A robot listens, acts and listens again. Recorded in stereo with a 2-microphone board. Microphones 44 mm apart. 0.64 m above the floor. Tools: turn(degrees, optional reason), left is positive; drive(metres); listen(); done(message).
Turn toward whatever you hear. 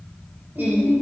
turn(degrees=-45, reason="The singing: about 45° right or 135° right.")
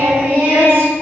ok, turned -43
turn(degrees=-90, reason="So it is at 90° right.")
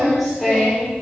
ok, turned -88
done("Facing the singing, 2 to 4 m away.")